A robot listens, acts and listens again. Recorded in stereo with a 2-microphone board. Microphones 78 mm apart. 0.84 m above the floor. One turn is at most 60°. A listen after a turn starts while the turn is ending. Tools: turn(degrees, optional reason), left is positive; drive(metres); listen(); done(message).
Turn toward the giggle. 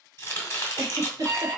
turn(degrees=-45, reason="The giggle: about 45° right or 135° right.")
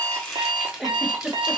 done("Found it: a giggle, straight ahead, under 1 m away.")